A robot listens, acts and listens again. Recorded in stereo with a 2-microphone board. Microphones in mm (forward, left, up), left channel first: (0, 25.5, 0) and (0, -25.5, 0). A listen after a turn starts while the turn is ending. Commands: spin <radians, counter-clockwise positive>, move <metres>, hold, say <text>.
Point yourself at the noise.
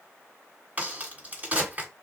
spin -0.52
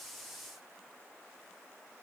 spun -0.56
hold
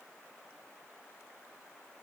say I heard a crack, but can't make it out now. It was about straight ahead or 120° right.